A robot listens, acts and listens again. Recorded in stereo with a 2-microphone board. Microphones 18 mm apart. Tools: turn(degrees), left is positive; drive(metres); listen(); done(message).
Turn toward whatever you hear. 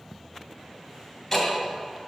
turn(degrees=20)
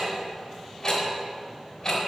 turn(degrees=140)
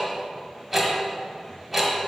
turn(degrees=-15)
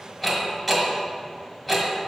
done("Facing the ticking, 1 to 2 m away.")